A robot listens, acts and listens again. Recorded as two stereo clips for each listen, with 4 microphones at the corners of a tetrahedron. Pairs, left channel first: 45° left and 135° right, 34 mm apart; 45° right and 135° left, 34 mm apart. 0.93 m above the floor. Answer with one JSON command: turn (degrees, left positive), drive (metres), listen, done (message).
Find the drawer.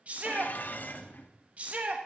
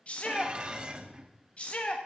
{"turn": -135}
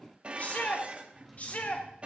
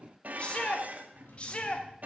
{"turn": -40}
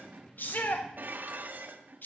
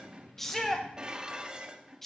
{"listen": true}
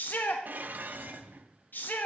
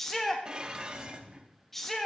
{"turn": -10}
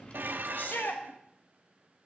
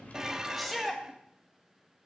{"done": "Facing the drawer."}